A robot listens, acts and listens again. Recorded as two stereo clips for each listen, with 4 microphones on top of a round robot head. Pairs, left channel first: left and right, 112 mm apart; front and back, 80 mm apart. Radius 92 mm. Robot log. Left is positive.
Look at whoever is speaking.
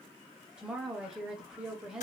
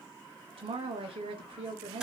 note: The woman speaking: 175° right.
cmd yaw -175
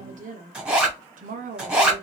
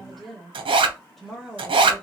note: The woman speaking is now 85° right.
cmd yaw -85
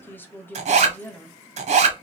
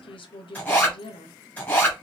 note: The woman speaking is now 15° left.
cmd yaw +15
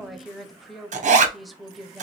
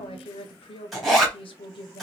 end: Facing the woman speaking, under 1 m away.